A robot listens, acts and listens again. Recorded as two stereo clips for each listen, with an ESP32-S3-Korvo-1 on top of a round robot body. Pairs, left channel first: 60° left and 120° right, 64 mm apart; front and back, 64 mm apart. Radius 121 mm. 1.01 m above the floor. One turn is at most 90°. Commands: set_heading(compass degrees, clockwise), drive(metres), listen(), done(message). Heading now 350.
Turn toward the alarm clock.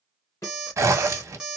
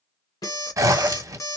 set_heading(30)
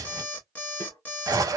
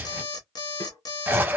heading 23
done("Facing the alarm clock, under 1 m away.")